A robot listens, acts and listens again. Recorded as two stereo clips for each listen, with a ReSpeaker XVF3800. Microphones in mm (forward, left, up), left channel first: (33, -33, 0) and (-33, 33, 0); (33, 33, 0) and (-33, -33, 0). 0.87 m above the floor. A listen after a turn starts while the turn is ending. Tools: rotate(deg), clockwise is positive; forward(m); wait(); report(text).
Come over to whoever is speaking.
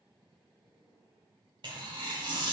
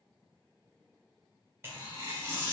wait()
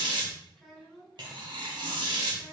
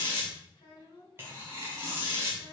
rotate(-40)
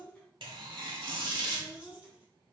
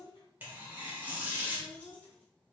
rotate(-30)
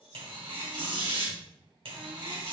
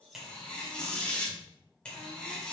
wait()
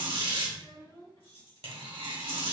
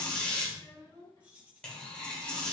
forward(1.0)
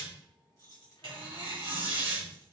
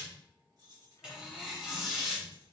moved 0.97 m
wait()
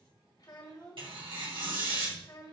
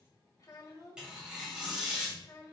forward(1.0)
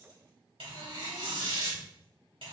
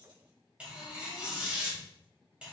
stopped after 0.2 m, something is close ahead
wait()
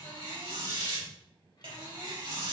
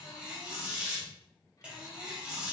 wait()
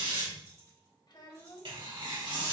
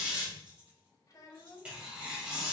report("Arrived at the child speaking, straight ahead.")